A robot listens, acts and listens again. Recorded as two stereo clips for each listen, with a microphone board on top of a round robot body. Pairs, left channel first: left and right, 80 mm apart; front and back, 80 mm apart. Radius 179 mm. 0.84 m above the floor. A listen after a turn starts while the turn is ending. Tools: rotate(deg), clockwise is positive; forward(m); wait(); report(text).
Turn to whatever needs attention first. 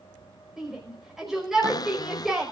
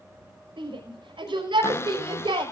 rotate(175)
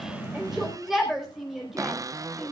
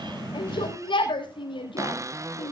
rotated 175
report("Facing the shout.")